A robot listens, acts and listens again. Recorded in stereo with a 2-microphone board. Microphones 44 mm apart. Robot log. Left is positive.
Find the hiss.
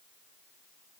cmd idle
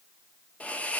note: The hiss: about 30° left or 150° left.
cmd yaw +30
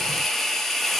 end: Found it: a hiss, straight ahead.